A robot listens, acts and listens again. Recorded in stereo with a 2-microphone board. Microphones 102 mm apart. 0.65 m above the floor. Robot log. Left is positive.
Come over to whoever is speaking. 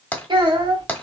note: The child speaking: about 50° right or 130° right.
cmd yaw -50
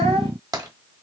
note: So it is at 75° right.
cmd yaw -75
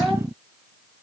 note: The child speaking is now 25° right.
cmd yaw -25
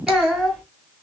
cmd fwd 1.0
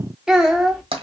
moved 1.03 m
cmd fwd 1.0
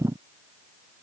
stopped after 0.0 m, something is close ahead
cmd idle
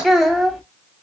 end: I am next to the child speaking.